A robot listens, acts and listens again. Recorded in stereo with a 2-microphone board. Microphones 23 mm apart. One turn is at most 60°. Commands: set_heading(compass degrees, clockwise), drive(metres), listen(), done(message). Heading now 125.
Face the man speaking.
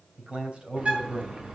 set_heading(185)
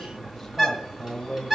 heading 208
set_heading(198)
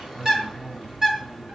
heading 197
done("Facing the man speaking.")